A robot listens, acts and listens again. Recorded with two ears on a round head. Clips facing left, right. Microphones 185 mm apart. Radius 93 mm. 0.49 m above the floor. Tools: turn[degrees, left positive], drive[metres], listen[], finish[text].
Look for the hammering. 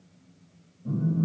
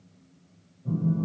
Action: listen[]
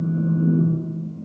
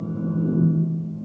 Action: listen[]
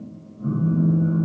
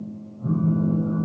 Action: finish[I can't make out hammering to turn to.]